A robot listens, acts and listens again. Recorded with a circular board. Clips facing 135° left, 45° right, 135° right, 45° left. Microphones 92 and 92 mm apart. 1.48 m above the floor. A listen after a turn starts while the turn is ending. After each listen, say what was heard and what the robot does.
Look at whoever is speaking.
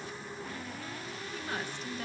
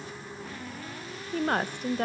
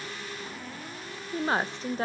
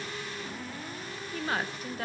The woman speaking: 75° right. Turn 75° right.
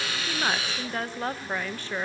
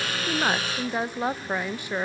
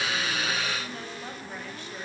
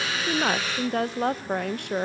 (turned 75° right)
The woman speaking is now 30° left. Turn 30° left.
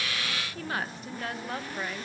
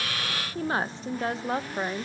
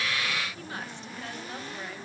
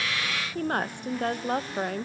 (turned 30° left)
The woman speaking is now 15° left. Turn 15° left.
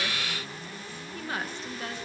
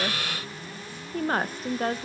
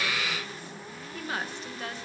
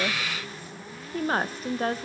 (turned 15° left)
Facing the woman speaking.